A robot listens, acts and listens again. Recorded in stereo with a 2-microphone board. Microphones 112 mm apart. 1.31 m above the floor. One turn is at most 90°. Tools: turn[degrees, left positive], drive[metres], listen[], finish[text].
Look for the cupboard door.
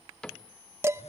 Action: turn[30]
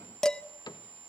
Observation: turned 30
Thought: So it is at 140° left.
Action: turn[90]
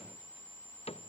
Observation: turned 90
Thought: The cupboard door is now 105° left.
Action: turn[90]
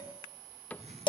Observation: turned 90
Thought: The cupboard door is now 15° left.
Action: turn[15]
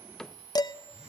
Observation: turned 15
Action: finish[Facing the cupboard door.]